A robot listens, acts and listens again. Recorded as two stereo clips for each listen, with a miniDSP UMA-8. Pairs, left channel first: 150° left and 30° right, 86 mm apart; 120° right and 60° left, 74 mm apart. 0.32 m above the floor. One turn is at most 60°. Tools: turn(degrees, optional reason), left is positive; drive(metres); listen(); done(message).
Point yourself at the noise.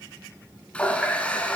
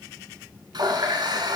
turn(degrees=60, reason="The running tap: 75° left.")
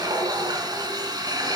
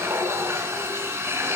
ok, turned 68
done("Found it: a running tap, straight ahead.")